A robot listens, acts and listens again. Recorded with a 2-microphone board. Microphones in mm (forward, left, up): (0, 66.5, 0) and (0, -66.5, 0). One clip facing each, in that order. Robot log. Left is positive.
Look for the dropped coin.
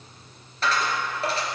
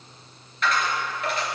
note: The dropped coin: about 35° left or 145° left.
cmd yaw +35
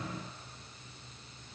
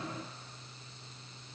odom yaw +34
cmd idle
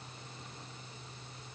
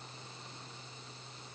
end: I heard a dropped coin, but can't make it out now. It was about straight ahead or 110° left.